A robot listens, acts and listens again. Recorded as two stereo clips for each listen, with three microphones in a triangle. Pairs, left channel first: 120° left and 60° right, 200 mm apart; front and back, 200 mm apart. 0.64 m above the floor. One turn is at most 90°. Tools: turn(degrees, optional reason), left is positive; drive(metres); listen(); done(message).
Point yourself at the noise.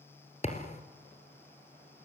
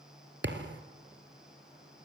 turn(degrees=90, reason="The thud: 175° left.")
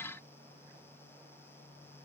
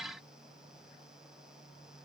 turn(degrees=85, reason="Nothing new. It was at 85° left.")
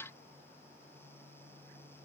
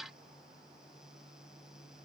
done("I heard a thud from this way, but can't make it out now.")